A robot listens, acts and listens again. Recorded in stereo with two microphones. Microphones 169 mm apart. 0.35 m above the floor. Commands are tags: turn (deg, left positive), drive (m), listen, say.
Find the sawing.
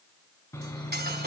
<turn deg="15"/>
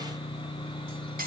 <turn deg="150"/>
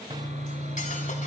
<turn deg="-50"/>
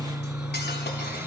<turn deg="-15"/>
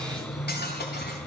<say>Facing the sawing.</say>